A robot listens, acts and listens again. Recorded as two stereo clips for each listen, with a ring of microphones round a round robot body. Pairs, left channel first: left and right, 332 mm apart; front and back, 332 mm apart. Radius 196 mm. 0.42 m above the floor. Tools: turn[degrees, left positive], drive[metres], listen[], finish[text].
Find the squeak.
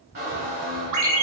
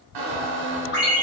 Thought: The squeak: 160° right.
Action: turn[-160]
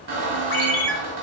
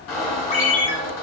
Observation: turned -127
Thought: The squeak is now 35° right.
Action: turn[-35]
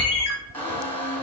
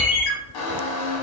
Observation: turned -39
Action: finish[Found it: a squeak, straight ahead.]